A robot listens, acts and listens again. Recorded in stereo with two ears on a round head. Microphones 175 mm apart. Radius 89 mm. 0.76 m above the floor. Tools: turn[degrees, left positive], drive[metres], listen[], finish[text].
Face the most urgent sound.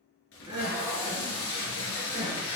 Thought: The crying: about 20° right or 160° right.
Action: turn[-20]
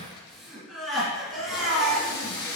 Action: finish[Found it: crying, straight ahead, 2 to 4 m away.]